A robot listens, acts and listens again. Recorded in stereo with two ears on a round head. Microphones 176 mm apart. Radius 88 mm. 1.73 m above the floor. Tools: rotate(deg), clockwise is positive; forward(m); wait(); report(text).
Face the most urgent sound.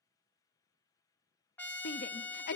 rotate(-55)
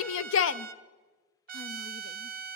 rotate(-70)
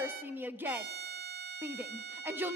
rotate(10)
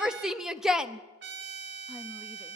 report("Facing the shout.")